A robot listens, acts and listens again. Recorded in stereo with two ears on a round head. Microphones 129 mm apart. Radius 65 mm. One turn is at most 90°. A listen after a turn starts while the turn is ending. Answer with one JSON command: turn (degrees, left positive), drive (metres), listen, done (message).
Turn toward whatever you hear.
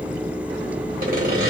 {"turn": -60}
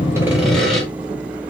{"done": "Found it: sawing, straight ahead, 1 to 2 m away."}